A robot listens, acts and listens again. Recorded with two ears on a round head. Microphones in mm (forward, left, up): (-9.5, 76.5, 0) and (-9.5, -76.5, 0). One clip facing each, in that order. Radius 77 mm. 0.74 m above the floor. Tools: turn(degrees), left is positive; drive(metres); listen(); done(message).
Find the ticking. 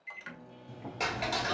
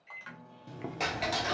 turn(degrees=30)
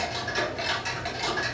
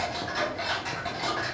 turn(degrees=150)
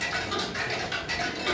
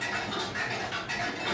turn(degrees=50)
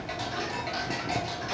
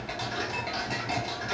done("Found it: ticking, straight ahead.")